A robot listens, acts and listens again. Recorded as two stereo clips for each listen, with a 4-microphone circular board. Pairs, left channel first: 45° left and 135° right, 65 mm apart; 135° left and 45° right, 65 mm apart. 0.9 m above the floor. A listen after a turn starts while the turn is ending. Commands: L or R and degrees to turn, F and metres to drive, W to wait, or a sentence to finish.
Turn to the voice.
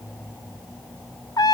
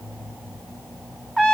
W
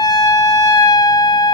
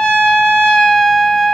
W
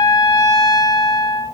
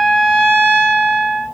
I can't make out anyone speaking, only a trumpet.